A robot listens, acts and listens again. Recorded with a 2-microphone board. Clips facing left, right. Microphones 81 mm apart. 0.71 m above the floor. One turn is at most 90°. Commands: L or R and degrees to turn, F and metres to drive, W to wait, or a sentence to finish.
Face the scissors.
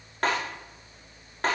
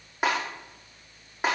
W
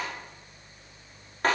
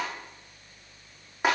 W
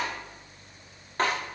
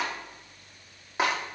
I can't make out scissors to turn to.